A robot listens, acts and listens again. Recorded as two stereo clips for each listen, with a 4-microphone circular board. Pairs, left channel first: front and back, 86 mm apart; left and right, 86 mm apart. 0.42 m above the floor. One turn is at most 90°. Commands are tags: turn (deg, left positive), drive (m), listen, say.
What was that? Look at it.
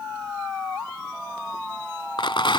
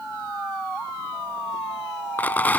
<turn deg="20"/>
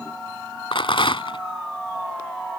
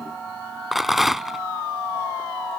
<say>Facing the rattle.</say>